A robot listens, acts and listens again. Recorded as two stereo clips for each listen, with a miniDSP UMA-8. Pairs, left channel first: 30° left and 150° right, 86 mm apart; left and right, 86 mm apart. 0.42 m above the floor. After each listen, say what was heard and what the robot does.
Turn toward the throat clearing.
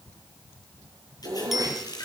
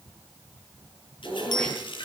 The throat clearing: 165° left. Turn 165° left.
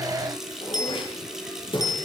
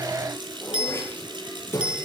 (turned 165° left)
The throat clearing is now 30° left. Turn 30° left.
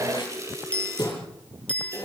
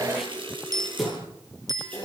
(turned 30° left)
Found it: throat clearing, straight ahead, over 4 m away.